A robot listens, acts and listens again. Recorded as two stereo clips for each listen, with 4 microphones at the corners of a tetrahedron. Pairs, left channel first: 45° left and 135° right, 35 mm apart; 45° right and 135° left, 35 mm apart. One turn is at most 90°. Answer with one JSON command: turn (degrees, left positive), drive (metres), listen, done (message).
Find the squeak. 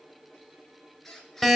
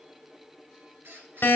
{"turn": 90}
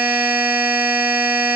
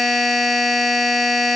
{"turn": 35}
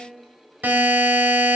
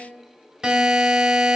{"listen": true}
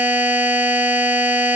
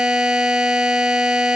{"done": "I heard a squeak from this way, but can't make it out now."}